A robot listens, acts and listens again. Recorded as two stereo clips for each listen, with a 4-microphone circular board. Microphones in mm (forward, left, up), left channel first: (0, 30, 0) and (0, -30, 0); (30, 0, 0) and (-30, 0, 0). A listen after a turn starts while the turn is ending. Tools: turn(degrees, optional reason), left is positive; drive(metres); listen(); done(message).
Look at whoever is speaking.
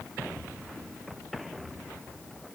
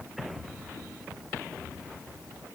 listen()
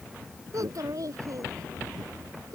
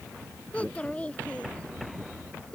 turn(degrees=-70, reason="The child speaking: 70° right.")
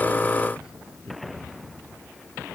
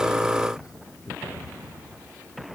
turn(degrees=-15, reason="The child speaking is now 15° right.")
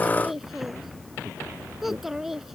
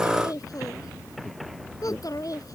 done("Found it: a child speaking, straight ahead.")